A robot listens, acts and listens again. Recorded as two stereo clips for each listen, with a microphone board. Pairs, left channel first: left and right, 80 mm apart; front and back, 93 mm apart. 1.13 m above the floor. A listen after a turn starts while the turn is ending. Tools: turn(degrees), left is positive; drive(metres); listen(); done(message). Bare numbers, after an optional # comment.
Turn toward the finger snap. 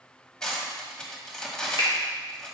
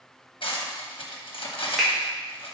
# The finger snap: 90° left.
turn(90)
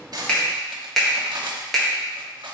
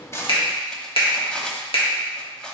done("Found it: a finger snap, straight ahead, 1 to 2 m away.")